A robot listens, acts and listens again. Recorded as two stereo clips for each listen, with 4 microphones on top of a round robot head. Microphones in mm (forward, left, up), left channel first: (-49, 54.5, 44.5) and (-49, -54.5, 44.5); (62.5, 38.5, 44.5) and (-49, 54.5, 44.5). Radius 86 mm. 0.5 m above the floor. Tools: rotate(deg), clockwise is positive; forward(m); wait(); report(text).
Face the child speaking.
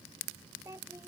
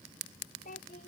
rotate(20)
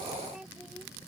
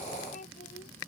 report("Facing the child speaking.")